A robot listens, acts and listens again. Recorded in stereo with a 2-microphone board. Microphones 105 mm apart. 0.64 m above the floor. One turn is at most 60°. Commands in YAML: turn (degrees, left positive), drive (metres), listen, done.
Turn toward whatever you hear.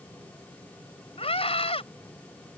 turn: 60
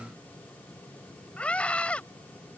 turn: 10
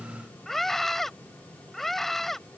done: "Facing the scream."